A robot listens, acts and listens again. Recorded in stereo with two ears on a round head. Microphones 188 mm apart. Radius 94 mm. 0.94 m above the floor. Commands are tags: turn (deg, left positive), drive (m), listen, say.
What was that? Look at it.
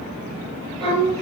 <turn deg="-30"/>
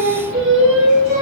<turn deg="-115"/>
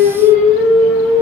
<turn deg="10"/>
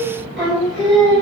<say>Found it: singing, straight ahead.</say>